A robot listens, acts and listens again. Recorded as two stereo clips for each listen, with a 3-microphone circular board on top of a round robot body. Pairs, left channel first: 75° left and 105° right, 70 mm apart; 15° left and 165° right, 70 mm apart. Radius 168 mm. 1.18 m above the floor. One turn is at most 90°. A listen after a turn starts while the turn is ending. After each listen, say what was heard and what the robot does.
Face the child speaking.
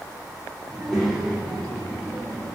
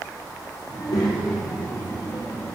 The child speaking: 25° right. Turn 25° right.
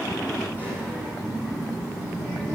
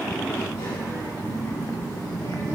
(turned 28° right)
Found it: a child speaking, straight ahead.